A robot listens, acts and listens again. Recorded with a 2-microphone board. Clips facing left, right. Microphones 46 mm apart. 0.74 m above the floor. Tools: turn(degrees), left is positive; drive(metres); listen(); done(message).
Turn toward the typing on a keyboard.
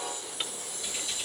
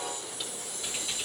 listen()
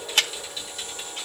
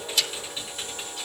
turn(degrees=-20)
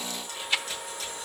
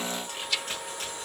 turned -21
turn(degrees=-140)
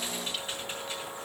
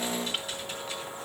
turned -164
turn(degrees=25)
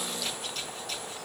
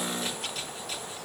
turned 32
listen()
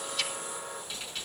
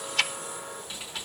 done("Found it: typing on a keyboard, straight ahead, over 4 m away.")